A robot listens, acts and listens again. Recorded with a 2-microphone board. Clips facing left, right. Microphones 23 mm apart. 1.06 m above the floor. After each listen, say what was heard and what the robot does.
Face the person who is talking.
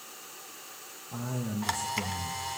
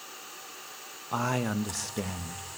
The man speaking: about 60° right or 120° right. Turn 60° right.
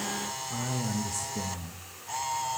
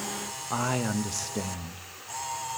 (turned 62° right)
So it is at 50° right. Turn 50° right.
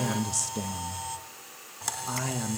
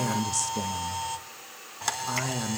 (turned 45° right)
Facing the man speaking, under 1 m away.